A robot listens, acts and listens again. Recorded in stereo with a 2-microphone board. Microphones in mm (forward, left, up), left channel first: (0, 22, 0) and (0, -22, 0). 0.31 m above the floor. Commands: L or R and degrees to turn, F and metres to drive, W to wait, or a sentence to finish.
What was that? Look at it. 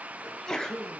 L30
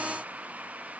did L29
W
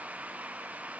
I heard a sneeze, but can't make it out now. It was about 15° right or 140° left.